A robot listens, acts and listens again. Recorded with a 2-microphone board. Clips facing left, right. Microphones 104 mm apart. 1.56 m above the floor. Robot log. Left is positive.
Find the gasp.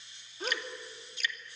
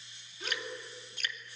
note: The gasp: about 45° left or 135° left.
cmd yaw +45
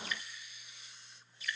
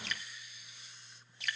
cmd idle
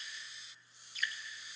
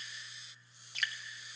end: I heard a gasp, but can't make it out now. It was about straight ahead or 90° left.